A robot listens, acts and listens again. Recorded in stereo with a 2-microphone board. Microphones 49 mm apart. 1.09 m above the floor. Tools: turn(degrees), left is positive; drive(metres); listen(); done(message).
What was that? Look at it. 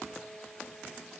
listen()
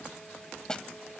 turn(degrees=30)
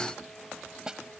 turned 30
turn(degrees=-15)
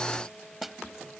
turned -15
done("Facing the snare drum.")